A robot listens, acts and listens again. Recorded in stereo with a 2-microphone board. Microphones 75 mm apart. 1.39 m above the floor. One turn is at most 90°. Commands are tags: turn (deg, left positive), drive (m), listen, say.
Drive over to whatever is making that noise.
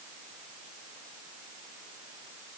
<listen/>
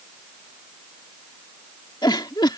<turn deg="90"/>
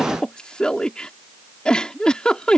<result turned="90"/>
<turn deg="10"/>
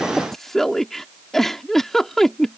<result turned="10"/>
<drive m="1.0"/>
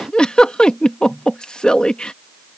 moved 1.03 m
<turn deg="10"/>
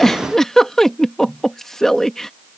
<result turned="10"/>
<drive m="1.0"/>
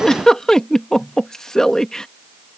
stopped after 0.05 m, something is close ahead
<turn deg="10"/>
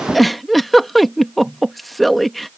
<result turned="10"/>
<say>Arrived at the giggle, straight ahead.</say>